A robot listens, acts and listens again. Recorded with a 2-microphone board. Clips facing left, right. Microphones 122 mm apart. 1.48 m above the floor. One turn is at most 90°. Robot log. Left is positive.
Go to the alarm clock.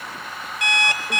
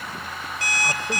note: The alarm clock: about 40° right or 140° right.
cmd yaw -40
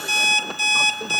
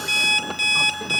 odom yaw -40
note: So it is at 100° right.
cmd yaw -90
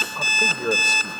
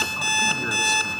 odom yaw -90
cmd fwd 1.0
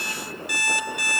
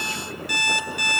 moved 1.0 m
cmd fwd 1.0
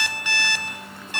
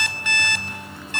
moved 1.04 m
note: The alarm clock is now 10° left.
cmd yaw +10
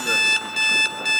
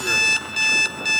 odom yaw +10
cmd fwd 1.0
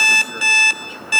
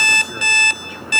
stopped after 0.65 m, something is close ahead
note: The alarm clock is now 10° left.
cmd yaw +10
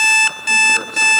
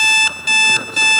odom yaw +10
end: Arrived at the alarm clock, straight ahead.